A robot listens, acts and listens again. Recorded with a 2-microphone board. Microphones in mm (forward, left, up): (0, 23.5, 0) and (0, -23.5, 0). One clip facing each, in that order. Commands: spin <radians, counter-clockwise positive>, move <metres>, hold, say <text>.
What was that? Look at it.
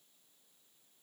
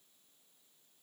hold
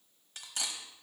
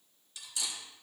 spin 0.87
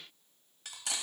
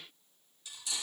spin 1.40
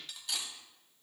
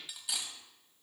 say Facing the cutlery clinking.